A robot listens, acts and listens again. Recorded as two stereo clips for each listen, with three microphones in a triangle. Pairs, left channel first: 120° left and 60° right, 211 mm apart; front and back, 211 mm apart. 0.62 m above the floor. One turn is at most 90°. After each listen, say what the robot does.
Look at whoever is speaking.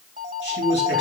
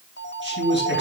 Turn 90° left.
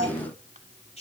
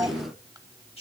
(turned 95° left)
Turn 60° left.
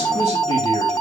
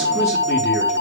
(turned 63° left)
Keep listening.
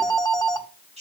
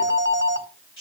Facing the man speaking.